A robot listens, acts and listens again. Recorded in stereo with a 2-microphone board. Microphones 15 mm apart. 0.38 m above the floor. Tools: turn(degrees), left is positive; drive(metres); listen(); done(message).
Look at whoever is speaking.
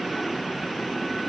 listen()
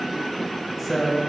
turn(degrees=30)
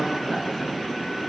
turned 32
listen()
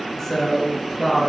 turn(degrees=140)
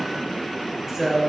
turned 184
turn(degrees=-45)
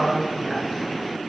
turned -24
turn(degrees=-20)
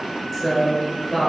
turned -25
done("Found it: a woman speaking, straight ahead.")